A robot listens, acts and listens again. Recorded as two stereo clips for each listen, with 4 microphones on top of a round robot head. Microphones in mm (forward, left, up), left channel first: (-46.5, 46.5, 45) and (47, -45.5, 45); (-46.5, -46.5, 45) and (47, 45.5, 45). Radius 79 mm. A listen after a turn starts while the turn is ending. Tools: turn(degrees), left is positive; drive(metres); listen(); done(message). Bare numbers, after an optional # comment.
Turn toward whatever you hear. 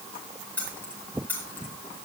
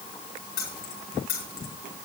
# The keys jangling: 145° right.
turn(-145)
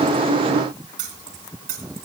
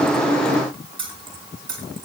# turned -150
# The keys jangling is now 15° right.
turn(-15)
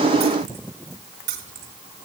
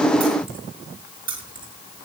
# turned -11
# The keys jangling is now 10° right.
turn(-10)
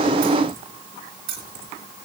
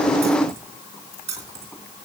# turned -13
done("Facing the keys jangling, 2 to 4 m away.")